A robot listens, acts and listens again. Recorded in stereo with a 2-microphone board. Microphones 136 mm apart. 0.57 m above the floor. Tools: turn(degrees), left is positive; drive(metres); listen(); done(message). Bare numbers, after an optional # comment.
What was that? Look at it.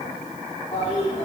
# The toilet flushing: about 40° left or 140° left.
turn(40)
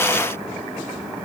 done("Found it: a toilet flushing, straight ahead.")